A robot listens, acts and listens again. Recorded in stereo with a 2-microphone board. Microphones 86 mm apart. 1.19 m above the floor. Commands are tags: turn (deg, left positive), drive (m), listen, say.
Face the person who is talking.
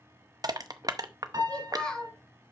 <turn deg="30"/>
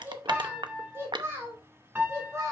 <turn deg="-35"/>
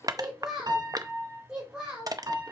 <turn deg="-10"/>
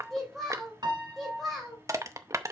<say>Found it: a child speaking, straight ahead.</say>